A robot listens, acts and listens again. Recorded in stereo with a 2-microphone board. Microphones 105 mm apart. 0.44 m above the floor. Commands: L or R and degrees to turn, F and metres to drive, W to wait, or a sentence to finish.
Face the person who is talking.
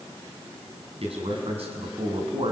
R75
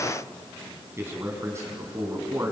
R30
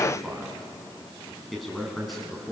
Found it: a man speaking, straight ahead.